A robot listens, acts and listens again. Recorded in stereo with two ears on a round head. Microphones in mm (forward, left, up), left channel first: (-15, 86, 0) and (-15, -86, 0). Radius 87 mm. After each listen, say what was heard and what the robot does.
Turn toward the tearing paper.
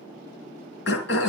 Keep listening.
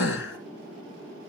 Keep listening.
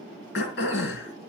I can't make out tearing paper to turn to.